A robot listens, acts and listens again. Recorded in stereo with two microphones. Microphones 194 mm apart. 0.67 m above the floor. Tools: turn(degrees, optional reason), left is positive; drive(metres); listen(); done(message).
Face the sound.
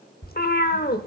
turn(degrees=50, reason="The cat meowing: about 50° left or 130° left.")
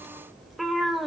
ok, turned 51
done("Facing the cat meowing, under 1 m away.")